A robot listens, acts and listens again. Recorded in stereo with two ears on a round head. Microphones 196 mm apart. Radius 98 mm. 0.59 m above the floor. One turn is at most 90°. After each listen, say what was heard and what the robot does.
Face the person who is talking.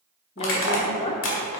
The woman speaking: about 25° left or 155° left. Turn 25° left.
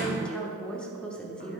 Found it: a woman speaking, straight ahead, 1 to 2 m away.